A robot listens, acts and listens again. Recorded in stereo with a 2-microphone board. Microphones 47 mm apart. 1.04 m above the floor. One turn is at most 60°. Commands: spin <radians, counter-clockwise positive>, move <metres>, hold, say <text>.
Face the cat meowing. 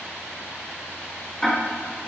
hold
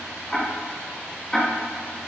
hold
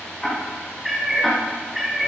spin 0.52
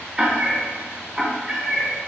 spin -0.35
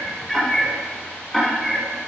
say Found it: a cat meowing, straight ahead.